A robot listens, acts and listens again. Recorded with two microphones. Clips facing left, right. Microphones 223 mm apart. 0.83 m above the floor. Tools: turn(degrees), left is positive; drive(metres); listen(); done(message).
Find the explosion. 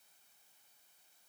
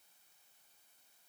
listen()
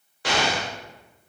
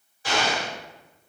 turn(degrees=65)
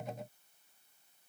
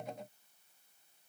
listen()
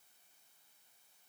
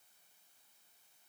done("I heard an explosion, but can't make it out now. It was about straight ahead or 50° left.")